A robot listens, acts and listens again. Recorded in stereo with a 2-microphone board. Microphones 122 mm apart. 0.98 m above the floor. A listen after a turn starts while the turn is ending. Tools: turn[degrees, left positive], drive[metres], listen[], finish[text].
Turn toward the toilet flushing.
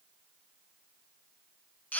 Action: listen[]
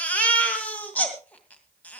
Action: listen[]
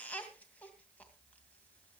Action: finish[I can't make out a toilet flushing, only a baby crying.]